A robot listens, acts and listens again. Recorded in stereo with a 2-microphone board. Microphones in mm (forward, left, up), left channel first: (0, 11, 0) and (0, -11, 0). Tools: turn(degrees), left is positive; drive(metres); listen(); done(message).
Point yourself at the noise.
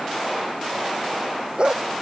turn(degrees=-50)
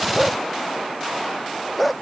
done("Facing the dog barking.")